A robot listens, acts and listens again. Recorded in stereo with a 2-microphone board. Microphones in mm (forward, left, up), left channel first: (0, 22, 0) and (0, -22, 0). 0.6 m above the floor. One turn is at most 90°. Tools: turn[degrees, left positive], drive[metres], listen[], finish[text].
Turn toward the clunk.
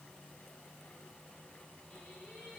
Action: listen[]
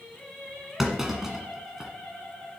Action: turn[-30]
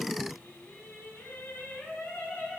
Action: listen[]
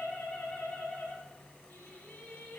Action: finish[I heard a clunk, but can't make it out now. It was about 20° left or 140° right.]